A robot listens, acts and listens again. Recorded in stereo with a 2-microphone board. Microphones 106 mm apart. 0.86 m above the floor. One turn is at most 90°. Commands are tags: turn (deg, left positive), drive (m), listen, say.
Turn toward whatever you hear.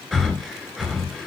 <turn deg="-30"/>
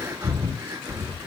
<turn deg="-90"/>
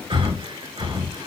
<turn deg="-50"/>
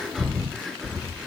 <say>Found it: breathing, straight ahead.</say>